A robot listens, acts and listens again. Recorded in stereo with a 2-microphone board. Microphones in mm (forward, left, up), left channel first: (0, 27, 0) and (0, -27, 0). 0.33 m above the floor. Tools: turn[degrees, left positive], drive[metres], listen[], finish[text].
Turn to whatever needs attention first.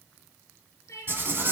Thought: The crying: about 65° left or 115° left.
Action: turn[65]
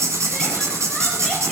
Action: listen[]
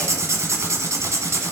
Action: listen[]
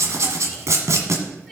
Action: finish[I heard crying, but can't make it out now. It was about straight ahead or 50° left.]